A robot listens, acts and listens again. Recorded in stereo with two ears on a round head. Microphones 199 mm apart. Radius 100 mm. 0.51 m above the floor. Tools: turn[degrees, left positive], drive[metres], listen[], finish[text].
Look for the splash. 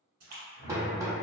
Thought: The splash: about 50° right or 130° right.
Action: turn[-50]
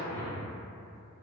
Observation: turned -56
Action: listen[]
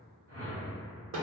Action: finish[I heard a splash, but can't make it out now. It was about 5° left or 75° right.]